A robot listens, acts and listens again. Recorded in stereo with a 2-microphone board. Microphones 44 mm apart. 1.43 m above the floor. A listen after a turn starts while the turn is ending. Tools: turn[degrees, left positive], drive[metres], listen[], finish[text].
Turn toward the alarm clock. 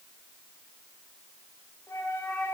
Action: listen[]
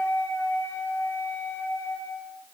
Action: listen[]
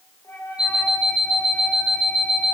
Thought: The alarm clock: about 15° right or 165° right.
Action: turn[-15]
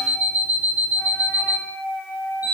Thought: So it is at 145° right.
Action: turn[-145]
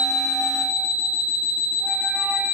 Thought: The alarm clock is now 15° right.
Action: turn[-15]
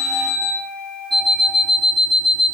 Action: finish[Facing the alarm clock, 2 to 4 m away.]